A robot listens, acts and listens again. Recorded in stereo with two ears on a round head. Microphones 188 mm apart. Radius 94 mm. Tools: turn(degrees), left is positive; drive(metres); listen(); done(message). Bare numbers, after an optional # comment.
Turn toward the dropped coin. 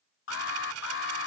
# The dropped coin: about 75° right or 105° right.
turn(-75)
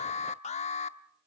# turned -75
listen()
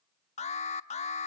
done("I heard a dropped coin, but can't make it out now. It was about straight ahead or 30° right.")